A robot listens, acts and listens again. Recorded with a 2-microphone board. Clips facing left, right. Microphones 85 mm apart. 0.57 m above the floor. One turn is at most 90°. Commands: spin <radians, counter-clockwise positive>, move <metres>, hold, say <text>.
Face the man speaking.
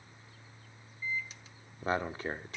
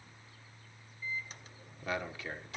spin 0.70
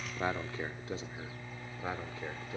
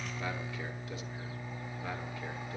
hold
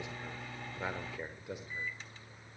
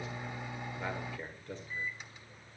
spin 0.17
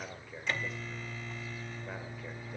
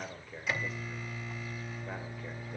say Facing the man speaking.